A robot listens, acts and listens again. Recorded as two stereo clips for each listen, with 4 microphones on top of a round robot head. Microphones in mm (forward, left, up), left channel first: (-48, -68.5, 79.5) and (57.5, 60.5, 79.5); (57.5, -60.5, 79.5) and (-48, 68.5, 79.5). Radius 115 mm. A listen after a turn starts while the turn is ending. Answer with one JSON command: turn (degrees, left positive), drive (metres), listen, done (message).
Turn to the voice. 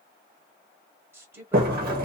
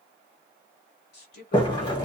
{"turn": -25}
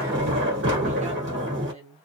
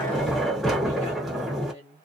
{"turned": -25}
{"done": "Facing the woman speaking, 1 to 2 m away."}